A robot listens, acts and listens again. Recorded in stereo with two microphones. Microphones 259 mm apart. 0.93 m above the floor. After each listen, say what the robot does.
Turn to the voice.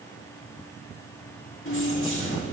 Keep listening.
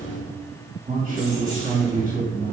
Turn 30° right.
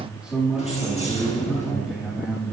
Found it: a man speaking, straight ahead, 2 to 4 m away.